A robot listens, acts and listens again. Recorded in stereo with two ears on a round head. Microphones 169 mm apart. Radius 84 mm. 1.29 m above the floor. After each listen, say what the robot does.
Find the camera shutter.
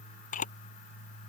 Turn 45° left.
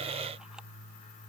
Keep listening.
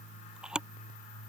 Facing the camera shutter.